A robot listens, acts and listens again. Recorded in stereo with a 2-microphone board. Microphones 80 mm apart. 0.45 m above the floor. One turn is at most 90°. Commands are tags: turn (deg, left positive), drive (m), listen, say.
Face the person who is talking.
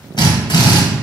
<listen/>
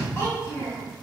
<turn deg="30"/>
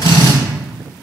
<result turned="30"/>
<listen/>
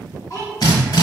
<turn deg="40"/>
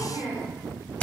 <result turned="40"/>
<turn deg="90"/>
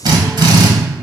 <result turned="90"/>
<turn deg="15"/>
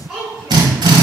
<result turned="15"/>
<turn deg="-10"/>
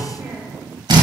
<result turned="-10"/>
<say>Found it: a child speaking, straight ahead, 2 to 4 m away.</say>